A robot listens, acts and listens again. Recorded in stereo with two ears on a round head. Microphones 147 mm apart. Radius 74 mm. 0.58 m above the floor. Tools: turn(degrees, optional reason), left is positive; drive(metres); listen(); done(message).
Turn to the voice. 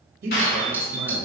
turn(degrees=-65, reason="The man speaking: about 65° right or 115° right.")
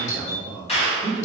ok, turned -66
turn(degrees=-10, reason="So it is at 10° right.")
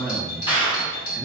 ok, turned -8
done("Facing the man speaking.")